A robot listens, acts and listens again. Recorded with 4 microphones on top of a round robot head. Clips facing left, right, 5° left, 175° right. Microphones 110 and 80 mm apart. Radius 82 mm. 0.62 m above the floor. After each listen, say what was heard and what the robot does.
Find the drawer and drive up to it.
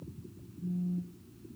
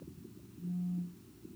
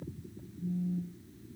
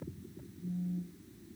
Keep listening.
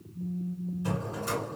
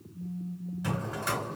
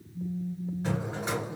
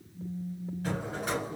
The drawer: 70° right. Turn 70° right.
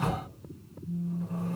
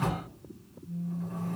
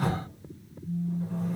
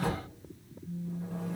The drawer is now 40° right. Turn 40° right.
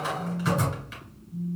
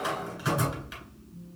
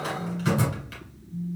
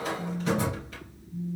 Drive 1.0 m forward.
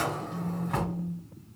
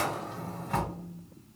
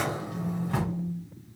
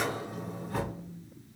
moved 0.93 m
Drive 1.0 m forward.
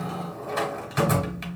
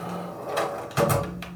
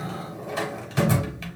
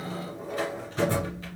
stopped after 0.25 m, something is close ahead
I am next to the drawer.